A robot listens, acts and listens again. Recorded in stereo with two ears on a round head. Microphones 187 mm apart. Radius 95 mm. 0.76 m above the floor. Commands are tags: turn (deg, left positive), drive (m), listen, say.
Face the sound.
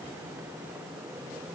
<listen/>
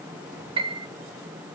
<turn deg="-25"/>
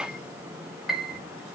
<say>Found it: a piano, straight ahead.</say>